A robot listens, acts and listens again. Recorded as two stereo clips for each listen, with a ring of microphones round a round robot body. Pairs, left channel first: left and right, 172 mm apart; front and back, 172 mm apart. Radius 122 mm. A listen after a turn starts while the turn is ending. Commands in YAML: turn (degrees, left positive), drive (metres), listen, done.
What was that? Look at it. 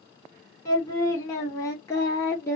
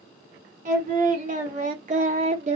turn: 160
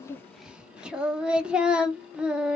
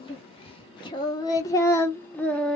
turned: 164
turn: -50
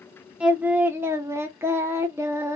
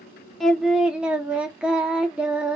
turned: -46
turn: -115
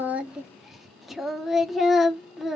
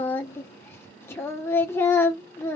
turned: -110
done: "Found it: singing, straight ahead."